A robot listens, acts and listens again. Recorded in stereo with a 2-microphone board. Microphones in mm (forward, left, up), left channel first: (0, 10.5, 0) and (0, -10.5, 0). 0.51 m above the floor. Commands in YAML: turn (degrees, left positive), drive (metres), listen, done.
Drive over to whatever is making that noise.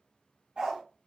turn: -65
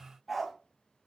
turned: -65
drive: 1.0
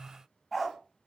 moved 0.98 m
drive: 1.0
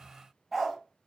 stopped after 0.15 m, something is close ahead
done: "I am next to the dog barking."